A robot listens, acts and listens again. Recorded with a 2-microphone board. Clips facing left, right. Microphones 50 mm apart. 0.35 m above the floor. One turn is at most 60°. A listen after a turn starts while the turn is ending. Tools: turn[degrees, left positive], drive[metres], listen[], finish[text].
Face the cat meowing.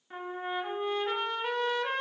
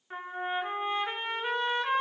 Action: listen[]
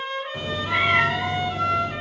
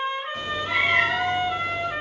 Action: turn[-30]
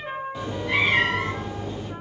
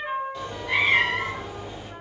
Action: turn[-30]
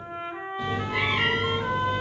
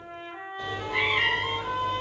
Action: turn[-30]
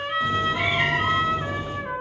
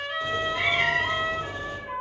Thought: So it is at 25° left.
Action: turn[25]
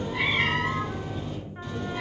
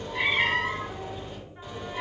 Thought: The cat meowing is now 10° right.
Action: turn[-10]
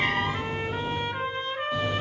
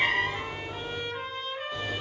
Action: finish[Found it: a cat meowing, straight ahead.]